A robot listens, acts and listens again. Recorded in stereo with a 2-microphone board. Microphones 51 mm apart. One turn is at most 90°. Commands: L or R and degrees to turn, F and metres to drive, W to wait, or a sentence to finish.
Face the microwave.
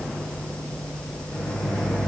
L70
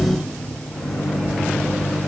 L10
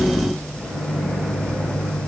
Found it: a microwave, straight ahead.